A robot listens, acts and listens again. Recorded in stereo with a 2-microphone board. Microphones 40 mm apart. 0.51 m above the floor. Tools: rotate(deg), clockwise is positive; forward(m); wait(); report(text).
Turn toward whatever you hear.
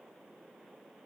wait()
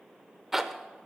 rotate(30)
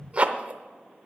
rotate(140)
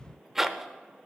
rotate(10)
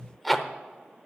report("Facing the zipper, under 1 m away.")